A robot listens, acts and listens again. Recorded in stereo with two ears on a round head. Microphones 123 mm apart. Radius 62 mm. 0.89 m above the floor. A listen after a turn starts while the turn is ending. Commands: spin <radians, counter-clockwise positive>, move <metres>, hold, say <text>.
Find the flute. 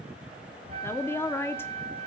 spin -0.79
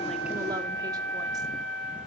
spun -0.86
say Found it: a flute, straight ahead.